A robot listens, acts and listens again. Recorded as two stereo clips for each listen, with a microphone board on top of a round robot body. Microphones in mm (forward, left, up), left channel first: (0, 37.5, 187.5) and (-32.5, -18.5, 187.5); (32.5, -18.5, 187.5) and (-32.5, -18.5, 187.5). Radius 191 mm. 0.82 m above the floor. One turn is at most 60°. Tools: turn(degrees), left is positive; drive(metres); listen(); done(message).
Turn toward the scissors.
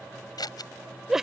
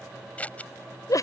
turn(degrees=60)
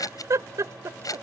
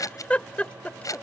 turn(degrees=30)
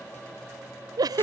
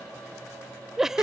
listen()
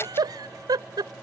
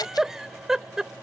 listen()
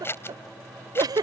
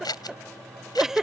done("Facing the scissors.")